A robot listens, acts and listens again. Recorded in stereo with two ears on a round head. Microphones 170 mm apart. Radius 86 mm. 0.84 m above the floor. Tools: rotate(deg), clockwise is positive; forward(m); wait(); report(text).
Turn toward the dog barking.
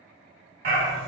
rotate(60)
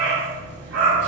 rotate(65)
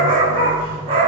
rotate(30)
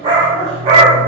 rotate(35)
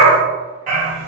rotate(45)
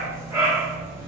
rotate(15)
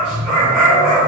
report("Facing the dog barking, 1 to 2 m away.")